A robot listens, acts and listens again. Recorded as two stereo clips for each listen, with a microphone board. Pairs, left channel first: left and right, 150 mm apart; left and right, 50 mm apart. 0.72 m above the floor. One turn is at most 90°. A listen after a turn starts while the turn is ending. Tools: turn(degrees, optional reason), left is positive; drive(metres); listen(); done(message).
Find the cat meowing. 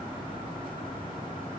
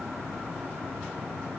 listen()
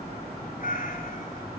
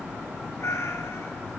turn(degrees=65, reason="The cat meowing: about 65° left or 115° left.")
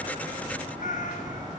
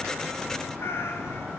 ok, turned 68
turn(degrees=60, reason="So it is at 60° left.")
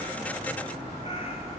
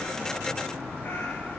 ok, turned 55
listen()
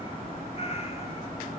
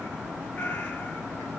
turn(degrees=45, reason="The cat meowing is now 45° left.")
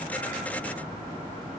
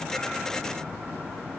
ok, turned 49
listen()
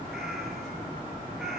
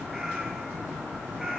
done("Found it: a cat meowing, straight ahead, 1 to 2 m away.")